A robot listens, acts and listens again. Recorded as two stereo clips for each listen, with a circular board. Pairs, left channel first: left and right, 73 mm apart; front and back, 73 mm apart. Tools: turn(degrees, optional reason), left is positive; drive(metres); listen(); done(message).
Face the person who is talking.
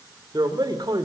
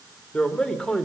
turn(degrees=-80, reason="The man speaking: 80° right.")
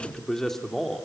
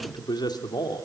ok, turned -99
done("Facing the man speaking, 2 to 4 m away.")